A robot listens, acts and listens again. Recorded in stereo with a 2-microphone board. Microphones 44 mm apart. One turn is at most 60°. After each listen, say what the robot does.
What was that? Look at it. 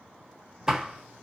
Turn 30° right.
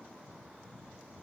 Keep listening.
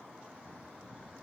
I heard a door slam, but can't make it out now. It was about 15° left or 135° right.